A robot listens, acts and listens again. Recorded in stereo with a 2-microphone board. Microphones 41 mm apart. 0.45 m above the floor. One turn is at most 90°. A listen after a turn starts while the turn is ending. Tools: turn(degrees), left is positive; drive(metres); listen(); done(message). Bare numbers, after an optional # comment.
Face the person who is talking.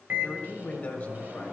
# The man speaking: about 35° left or 145° left.
turn(35)
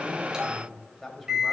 done("Found it: a man speaking, straight ahead, 1 to 2 m away.")